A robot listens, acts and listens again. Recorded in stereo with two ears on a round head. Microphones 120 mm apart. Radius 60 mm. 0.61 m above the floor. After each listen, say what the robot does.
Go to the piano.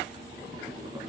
Keep listening.
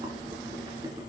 Keep listening.
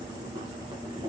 I can't make out a piano, only boiling.